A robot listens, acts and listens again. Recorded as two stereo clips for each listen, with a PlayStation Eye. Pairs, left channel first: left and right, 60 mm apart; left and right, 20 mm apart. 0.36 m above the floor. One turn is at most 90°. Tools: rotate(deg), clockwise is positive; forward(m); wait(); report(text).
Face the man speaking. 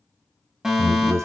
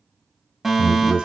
rotate(65)
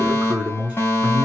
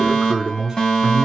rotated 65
rotate(25)
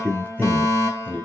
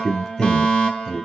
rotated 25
rotate(-25)
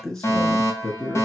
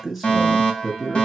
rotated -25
rotate(-10)
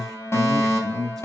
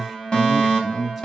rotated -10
report("Facing the man speaking.")